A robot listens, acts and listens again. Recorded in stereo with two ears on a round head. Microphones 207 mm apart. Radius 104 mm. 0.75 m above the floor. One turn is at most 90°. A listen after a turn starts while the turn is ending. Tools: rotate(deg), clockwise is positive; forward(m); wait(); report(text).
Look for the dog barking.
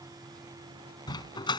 rotate(-20)
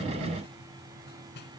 wait()
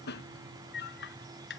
rotate(-90)
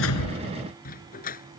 rotate(-35)
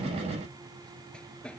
report("Facing the dog barking.")